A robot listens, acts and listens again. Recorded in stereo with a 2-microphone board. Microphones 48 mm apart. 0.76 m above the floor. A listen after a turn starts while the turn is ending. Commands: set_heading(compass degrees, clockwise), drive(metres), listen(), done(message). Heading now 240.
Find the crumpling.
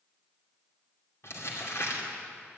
set_heading(175)
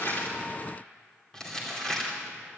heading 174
set_heading(159)
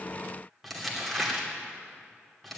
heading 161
done("Found it: crumpling, straight ahead.")